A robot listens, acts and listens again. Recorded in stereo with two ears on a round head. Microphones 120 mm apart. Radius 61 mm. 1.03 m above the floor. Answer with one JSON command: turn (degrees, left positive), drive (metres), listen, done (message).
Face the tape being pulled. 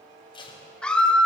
{"turn": 35}
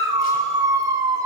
{"listen": true}
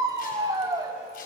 {"listen": true}
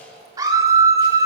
{"done": "I heard tape being pulled, but can't make it out now. It was about straight ahead or 110° left."}